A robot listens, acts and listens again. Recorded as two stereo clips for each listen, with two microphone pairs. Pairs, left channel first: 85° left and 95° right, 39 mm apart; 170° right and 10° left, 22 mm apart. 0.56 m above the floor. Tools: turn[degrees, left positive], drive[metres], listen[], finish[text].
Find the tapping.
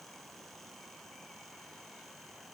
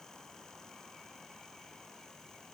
Action: listen[]
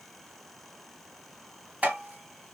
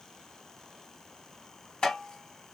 Thought: The tapping: 140° right.
Action: turn[-140]
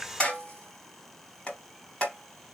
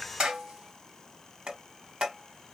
Thought: The tapping is now 20° left.
Action: turn[20]
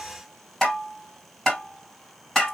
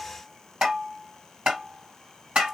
Action: finish[Found it: tapping, straight ahead, 2 to 4 m away.]